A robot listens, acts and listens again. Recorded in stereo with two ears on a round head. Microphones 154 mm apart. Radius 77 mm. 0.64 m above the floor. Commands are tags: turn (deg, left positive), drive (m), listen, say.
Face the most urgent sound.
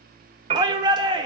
<turn deg="-25"/>
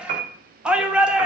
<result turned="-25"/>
<say>Found it: a shout, straight ahead.</say>